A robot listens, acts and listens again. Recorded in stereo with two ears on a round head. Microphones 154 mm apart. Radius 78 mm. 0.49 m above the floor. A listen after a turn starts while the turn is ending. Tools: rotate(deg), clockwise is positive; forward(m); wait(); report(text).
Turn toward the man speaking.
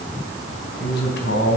rotate(-65)
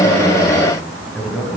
report("Found it: a man speaking, straight ahead.")